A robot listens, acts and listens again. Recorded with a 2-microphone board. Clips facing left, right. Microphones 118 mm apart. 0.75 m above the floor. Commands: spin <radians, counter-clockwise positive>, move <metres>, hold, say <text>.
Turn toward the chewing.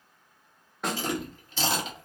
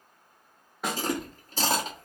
spin -0.70
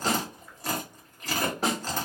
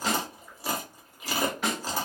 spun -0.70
spin -0.17
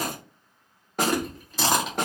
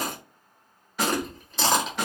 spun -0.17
say Found it: chewing, straight ahead, 1 to 2 m away.